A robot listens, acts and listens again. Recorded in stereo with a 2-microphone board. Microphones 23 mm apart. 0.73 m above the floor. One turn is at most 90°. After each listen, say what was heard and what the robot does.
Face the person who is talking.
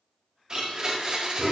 Keep listening.
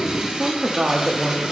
The woman speaking: about 45° right or 135° right. Turn 45° right.
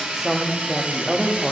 So it is at 10° right. Turn 10° right.
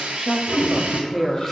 Found it: a woman speaking, straight ahead, under 1 m away.